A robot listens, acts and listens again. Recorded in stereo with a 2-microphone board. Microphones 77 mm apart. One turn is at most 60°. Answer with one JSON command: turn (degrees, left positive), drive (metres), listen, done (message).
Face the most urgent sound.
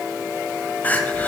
{"turn": 25}
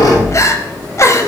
{"turn": 60}
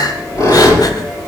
{"turn": 60}
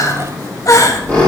{"turn": 60}
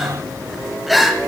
{"done": "Found it: crying, straight ahead, under 1 m away."}